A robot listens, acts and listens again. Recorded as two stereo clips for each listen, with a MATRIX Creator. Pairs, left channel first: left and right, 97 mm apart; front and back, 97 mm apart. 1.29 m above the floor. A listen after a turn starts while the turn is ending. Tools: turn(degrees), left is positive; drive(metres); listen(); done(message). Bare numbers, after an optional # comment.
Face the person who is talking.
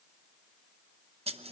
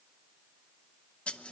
listen()
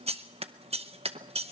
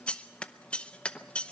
listen()
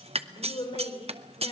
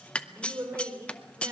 # The woman speaking: 115° left.
turn(115)
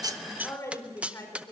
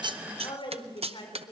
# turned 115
# The woman speaking is now 30° left.
turn(30)
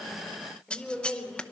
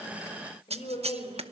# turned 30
done("Found it: a woman speaking, straight ahead.")